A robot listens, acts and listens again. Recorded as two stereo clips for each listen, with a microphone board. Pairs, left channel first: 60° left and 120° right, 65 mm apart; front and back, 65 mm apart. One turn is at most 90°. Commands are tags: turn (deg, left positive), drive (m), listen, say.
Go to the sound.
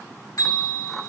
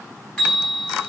<turn deg="70"/>
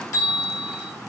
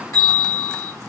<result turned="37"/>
<turn deg="35"/>
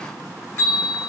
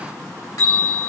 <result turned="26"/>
<turn deg="10"/>
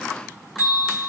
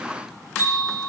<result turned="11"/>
<drive m="1.0"/>
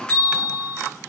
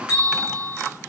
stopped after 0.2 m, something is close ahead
<say>Blocked. The bell is further on, straight ahead.</say>